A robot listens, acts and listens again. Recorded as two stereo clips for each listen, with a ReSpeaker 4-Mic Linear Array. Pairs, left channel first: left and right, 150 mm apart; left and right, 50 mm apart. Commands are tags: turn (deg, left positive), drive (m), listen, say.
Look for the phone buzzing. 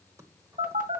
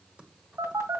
<turn deg="-65"/>
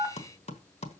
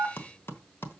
<say>Found it: a phone buzzing, straight ahead, 2 to 4 m away.</say>